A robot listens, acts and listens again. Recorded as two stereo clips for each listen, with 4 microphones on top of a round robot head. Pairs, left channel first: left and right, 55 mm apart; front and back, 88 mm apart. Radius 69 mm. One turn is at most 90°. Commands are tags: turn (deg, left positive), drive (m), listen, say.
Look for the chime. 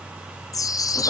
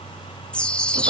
<turn deg="80"/>
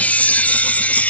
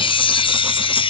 <turn deg="25"/>
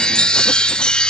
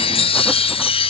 <turn deg="15"/>
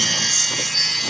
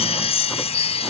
<say>Facing the chime.</say>